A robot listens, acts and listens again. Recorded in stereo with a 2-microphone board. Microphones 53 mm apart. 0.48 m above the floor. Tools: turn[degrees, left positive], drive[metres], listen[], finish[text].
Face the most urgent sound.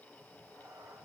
Action: listen[]
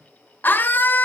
Thought: The scream: about 40° left or 140° left.
Action: turn[40]
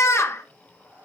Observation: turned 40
Thought: So it is at 95° left.
Action: turn[95]
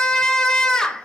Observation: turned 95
Thought: The scream is now 15° left.
Action: turn[15]
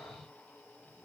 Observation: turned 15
Action: listen[]
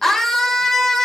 Action: finish[Found it: a scream, straight ahead, 1 to 2 m away.]